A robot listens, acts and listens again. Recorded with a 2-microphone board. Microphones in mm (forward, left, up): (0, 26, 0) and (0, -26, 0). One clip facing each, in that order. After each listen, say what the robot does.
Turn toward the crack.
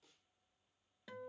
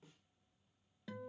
Keep listening.
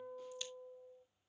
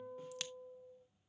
Turn 90° right.
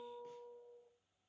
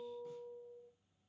Facing where the crack came from. I can't hear it now.